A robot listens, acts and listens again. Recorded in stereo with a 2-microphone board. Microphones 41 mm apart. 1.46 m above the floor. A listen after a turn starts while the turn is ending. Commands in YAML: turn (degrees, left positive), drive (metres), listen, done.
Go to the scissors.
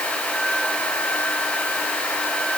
listen: true
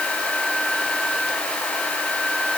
listen: true
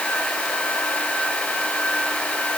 done: "I can't make out scissors to turn to."